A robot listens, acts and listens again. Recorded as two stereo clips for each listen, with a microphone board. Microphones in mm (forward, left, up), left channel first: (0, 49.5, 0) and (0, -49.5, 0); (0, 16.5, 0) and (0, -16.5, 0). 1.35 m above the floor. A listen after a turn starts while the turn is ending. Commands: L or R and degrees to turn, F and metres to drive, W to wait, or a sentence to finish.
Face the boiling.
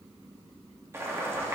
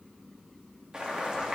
R25
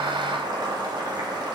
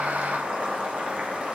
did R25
R125
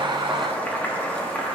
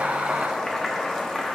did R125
L20
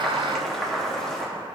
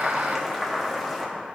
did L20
Facing the boiling.